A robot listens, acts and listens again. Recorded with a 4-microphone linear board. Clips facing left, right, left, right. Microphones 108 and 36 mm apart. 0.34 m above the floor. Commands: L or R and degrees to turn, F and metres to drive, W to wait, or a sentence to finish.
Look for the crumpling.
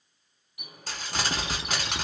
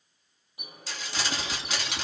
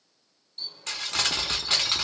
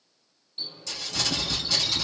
L50
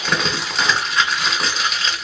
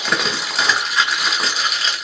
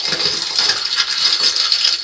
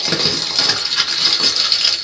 Facing the crumpling, 1 to 2 m away.